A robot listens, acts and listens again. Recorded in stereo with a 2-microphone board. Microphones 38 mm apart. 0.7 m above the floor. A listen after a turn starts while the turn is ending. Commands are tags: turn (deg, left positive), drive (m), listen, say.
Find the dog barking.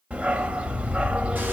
<turn deg="-35"/>
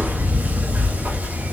<turn deg="-105"/>
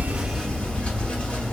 <say>Found it: a dog barking, straight ahead, under 1 m away.</say>